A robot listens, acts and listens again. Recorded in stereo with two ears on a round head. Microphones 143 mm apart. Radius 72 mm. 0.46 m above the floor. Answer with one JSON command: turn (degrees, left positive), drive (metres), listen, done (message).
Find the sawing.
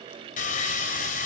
{"turn": 55}
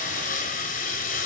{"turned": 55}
{"turn": 60}
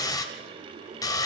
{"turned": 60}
{"turn": 25}
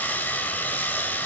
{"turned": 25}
{"turn": 15}
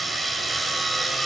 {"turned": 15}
{"done": "Found it: sawing, straight ahead, 2 to 4 m away."}